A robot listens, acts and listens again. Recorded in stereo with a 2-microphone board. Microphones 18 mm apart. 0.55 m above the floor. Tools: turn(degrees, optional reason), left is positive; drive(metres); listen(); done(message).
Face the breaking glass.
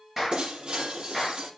turn(degrees=-45, reason="The breaking glass: about 45° right or 135° right.")
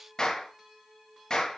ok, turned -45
listen()
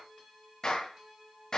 done("I heard breaking glass, but can't make it out now. It was about straight ahead or 90° right.")